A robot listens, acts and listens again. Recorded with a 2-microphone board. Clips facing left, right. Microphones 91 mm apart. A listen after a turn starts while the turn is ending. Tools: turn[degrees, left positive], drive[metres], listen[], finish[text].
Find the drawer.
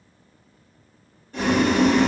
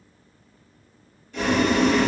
Action: listen[]
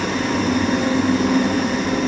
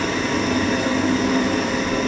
Action: listen[]
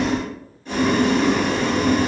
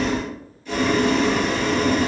Action: finish[I can't make out a drawer to turn to.]